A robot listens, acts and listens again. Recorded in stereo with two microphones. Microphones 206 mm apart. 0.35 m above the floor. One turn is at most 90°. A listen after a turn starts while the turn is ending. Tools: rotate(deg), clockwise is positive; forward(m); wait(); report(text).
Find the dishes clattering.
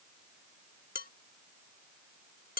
rotate(-45)
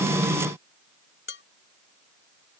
rotate(-85)
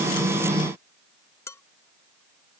rotate(-15)
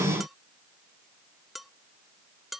report("Facing the dishes clattering.")